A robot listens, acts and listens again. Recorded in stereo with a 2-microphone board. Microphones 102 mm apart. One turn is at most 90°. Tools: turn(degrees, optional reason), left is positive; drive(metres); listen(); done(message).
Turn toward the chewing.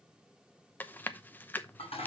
turn(degrees=20, reason="The chewing: about 20° left or 160° left.")
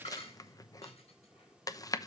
turn(degrees=90, reason="So it is at 140° left.")
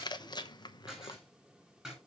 turn(degrees=50, reason="The chewing is now 50° left.")
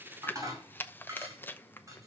turn(degrees=20, reason="The chewing is now 20° left.")
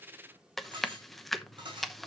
done("Found it: chewing, straight ahead, under 1 m away.")